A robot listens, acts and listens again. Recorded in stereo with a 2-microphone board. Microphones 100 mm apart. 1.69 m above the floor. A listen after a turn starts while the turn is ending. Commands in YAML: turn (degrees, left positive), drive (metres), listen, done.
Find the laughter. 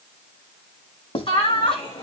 turn: 55
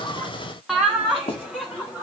turn: -15
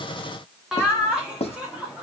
turn: -10
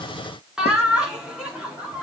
turn: -10
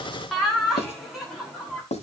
done: "Found it: laughter, straight ahead, over 4 m away."